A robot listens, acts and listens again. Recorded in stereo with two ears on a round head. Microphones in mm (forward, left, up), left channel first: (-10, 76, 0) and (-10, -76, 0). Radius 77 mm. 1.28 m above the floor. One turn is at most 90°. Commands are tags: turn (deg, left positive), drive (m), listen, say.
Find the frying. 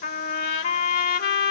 <listen/>
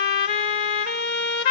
<listen/>
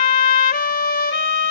<say>I can't make out frying, only a trumpet.</say>